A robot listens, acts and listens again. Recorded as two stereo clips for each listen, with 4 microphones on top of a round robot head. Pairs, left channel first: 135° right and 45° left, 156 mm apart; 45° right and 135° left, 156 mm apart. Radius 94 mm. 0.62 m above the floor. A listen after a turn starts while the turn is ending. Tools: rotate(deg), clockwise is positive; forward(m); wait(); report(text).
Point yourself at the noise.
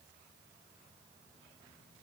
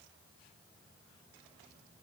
wait()
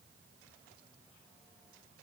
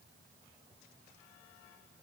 wait()
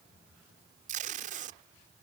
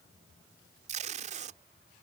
rotate(-90)
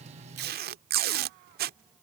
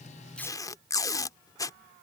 rotate(-25)
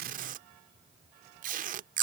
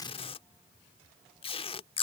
rotate(-10)
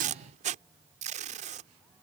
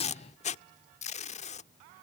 report("Facing the tape being pulled.")